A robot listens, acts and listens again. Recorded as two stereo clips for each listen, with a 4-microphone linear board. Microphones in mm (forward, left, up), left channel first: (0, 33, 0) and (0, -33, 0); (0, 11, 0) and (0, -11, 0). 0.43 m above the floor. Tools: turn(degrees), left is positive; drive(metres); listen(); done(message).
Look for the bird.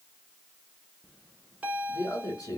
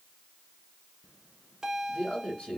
listen()
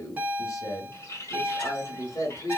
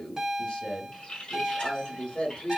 turn(degrees=45)
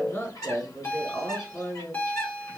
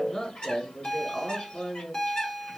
turn(degrees=80)
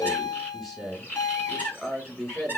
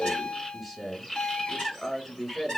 turn(degrees=35)
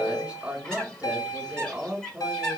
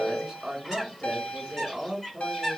turn(degrees=15)
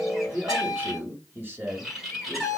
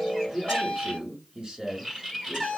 done("Facing the bird, 2 to 4 m away.")